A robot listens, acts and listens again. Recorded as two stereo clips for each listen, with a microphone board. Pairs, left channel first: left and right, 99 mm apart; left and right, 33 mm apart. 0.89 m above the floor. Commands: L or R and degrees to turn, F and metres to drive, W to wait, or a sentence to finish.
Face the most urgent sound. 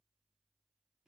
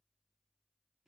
W
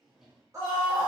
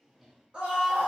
R30
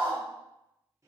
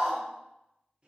R110
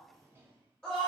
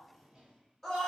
L10
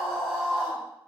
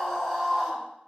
Found it: a scream, straight ahead.